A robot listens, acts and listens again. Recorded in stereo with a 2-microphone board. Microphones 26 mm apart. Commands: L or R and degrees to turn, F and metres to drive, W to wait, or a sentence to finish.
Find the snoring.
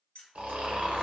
R60
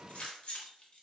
W
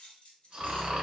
R50
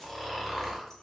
Facing the snoring, under 1 m away.